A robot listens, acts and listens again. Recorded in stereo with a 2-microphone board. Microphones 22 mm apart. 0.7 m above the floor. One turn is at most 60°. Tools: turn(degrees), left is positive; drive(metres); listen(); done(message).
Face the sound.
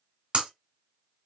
turn(degrees=-45)
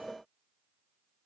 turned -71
listen()
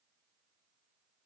done("I heard breaking glass, but can't make it out now. It was about 25° left or 65° right.")